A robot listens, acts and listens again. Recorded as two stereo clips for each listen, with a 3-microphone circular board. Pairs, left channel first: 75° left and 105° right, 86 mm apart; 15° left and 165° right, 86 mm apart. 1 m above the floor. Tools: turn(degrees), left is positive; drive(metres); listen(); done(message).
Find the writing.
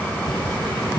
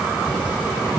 listen()
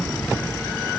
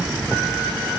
listen()
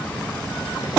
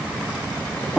done("I can't make out writing to turn to.")